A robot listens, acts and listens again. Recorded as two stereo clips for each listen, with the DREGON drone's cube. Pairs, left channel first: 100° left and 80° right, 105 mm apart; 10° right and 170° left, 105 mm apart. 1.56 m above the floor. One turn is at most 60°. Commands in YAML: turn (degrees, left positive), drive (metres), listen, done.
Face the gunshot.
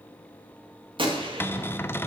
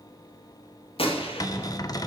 turn: -40
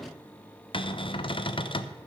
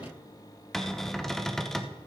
done: "I heard a gunshot from this way, but can't make it out now."